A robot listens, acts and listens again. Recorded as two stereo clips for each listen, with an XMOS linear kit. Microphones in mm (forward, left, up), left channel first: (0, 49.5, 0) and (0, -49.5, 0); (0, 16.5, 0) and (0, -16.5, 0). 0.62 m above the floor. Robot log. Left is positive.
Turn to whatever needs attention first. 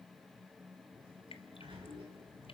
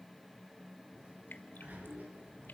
cmd idle
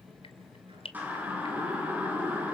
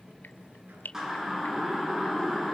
note: The siren: about 15° right or 165° right.
cmd yaw -15
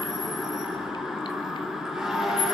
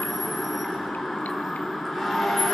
end: Found it: a siren, straight ahead, over 4 m away.